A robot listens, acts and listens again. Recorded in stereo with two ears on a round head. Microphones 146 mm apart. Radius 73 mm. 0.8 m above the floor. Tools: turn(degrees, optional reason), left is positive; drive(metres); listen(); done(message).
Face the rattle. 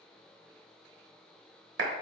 listen()
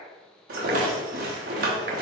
turn(degrees=-60, reason="The rattle: about 60° right or 120° right.")
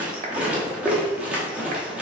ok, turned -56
turn(degrees=-10, reason="So it is at 10° right.")
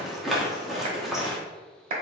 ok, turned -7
done("Found it: a rattle, straight ahead.")